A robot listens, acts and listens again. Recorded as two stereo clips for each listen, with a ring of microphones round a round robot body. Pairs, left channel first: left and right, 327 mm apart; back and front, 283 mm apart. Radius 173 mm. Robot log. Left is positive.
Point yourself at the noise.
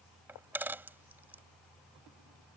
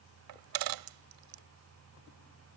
end: Found it: a dropped coin, straight ahead.